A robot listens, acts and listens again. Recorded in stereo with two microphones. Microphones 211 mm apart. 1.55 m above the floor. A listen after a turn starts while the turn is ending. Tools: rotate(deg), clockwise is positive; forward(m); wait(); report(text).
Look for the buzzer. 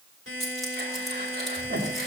rotate(90)
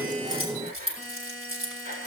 report("Facing the buzzer.")